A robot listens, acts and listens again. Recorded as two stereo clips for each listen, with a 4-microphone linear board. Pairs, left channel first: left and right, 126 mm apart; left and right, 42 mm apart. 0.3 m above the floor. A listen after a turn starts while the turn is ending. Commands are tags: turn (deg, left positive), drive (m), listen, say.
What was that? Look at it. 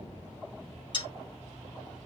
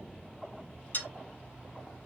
<turn deg="40"/>
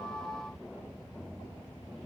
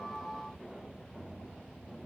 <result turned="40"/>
<listen/>
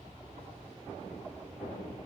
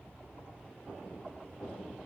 <say>I heard a dropped coin, but can't make it out now. It was about straight ahead or 100° left.</say>